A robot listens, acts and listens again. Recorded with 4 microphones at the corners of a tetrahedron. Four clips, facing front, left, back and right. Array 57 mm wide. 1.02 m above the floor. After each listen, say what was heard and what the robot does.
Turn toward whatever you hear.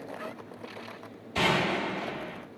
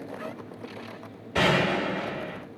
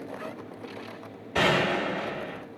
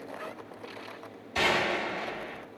The gunshot: 135° left. Turn 135° left.
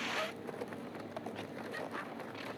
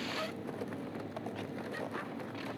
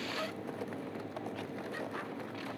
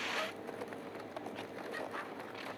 Facing where the gunshot came from. I can't hear it now.